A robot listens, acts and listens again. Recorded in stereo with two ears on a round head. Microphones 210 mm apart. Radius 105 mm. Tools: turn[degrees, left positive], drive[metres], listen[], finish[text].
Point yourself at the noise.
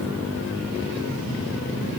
Action: listen[]
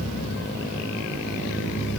Action: listen[]
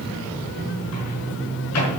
Action: turn[90]
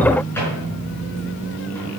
Thought: So it is at 10° left.
Action: turn[10]
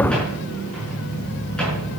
Action: listen[]
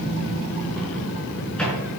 Action: finish[Found it: a microwave, straight ahead.]